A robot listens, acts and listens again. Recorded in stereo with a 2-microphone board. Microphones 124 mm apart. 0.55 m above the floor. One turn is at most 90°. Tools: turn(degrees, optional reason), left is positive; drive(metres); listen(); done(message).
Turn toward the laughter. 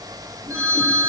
listen()
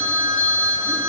listen()
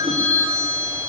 done("I can't make out laughter, only a phone ringing.")